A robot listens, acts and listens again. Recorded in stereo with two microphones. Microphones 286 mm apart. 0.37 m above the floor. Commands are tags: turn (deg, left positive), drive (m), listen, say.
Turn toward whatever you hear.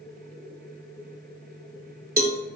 <turn deg="-35"/>
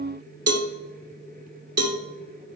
<turn deg="-115"/>
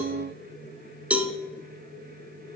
<say>Found it: a cowbell, straight ahead, under 1 m away.</say>